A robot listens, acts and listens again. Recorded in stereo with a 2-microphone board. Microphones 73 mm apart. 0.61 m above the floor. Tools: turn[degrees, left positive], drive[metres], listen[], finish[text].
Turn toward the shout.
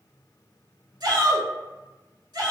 Thought: The shout: about 65° right or 115° right.
Action: turn[-65]
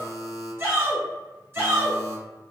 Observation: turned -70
Thought: So it is at 35° right.
Action: turn[-35]
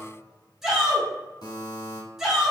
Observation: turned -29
Action: finish[Found it: a shout, straight ahead, 1 to 2 m away.]